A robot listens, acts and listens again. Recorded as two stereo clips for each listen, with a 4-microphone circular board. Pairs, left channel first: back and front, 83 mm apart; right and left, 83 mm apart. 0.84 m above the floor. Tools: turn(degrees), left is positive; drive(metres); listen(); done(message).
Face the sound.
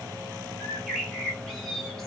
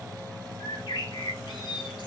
turn(degrees=-90)
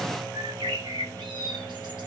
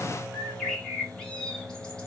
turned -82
turn(degrees=-10)
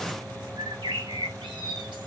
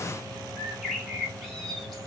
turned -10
done("Found it: a bird, straight ahead.")